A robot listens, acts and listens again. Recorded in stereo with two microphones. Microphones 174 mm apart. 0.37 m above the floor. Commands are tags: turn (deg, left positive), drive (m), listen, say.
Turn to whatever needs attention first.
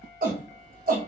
<turn deg="-55"/>
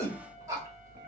<turn deg="-20"/>
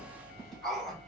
<say>Facing the shout.</say>